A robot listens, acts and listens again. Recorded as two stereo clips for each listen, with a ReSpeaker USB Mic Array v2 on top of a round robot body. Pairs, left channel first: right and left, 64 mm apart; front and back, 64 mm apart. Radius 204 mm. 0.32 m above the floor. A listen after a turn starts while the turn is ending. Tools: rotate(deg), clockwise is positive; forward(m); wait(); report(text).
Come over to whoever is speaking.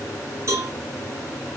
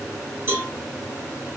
wait()
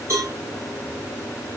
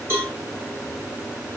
wait()
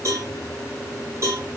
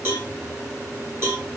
report("I can't make out anyone speaking, only a cowbell.")